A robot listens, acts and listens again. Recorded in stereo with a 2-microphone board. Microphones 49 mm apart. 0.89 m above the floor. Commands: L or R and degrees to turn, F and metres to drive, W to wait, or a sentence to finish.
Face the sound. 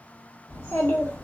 L50
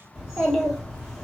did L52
Found it: a child speaking, straight ahead, 1 to 2 m away.